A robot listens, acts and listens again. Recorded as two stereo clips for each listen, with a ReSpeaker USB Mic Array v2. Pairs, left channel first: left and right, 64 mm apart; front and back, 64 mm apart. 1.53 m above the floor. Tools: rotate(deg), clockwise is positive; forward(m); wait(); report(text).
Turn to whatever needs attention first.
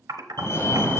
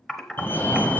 rotate(-55)
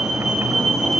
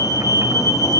report("Facing the fire alarm, 1 to 2 m away.")